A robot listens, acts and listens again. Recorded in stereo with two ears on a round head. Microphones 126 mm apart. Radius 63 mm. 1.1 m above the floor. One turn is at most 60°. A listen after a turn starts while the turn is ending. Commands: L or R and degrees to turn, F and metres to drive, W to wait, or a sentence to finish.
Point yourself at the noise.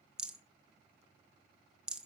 R30
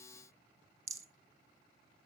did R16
R60
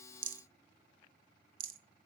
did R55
R60
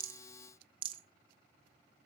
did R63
R40
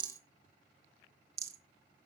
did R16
R25
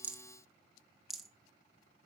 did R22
Found it: a rattle, straight ahead, 1 to 2 m away.